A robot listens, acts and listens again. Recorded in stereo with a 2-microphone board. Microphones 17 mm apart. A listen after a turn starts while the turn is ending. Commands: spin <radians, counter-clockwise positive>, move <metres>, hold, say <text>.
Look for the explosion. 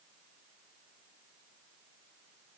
hold
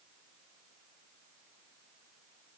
hold
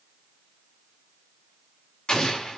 spin 0.87
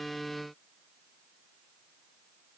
hold
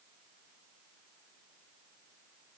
say I heard an explosion, but can't make it out now. It was about straight ahead or 80° left.